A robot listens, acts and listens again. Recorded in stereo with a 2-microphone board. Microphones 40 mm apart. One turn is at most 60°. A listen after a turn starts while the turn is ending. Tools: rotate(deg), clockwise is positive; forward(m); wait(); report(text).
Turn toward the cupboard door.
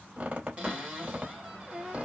rotate(25)
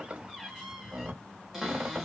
rotate(10)
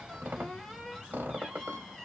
report("Found it: a cupboard door, straight ahead.")